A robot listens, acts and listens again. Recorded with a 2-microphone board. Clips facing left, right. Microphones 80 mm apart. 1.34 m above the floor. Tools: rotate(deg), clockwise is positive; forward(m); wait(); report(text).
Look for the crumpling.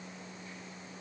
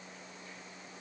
wait()
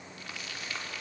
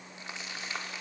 rotate(25)
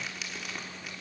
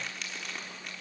report("Found it: crumpling, straight ahead.")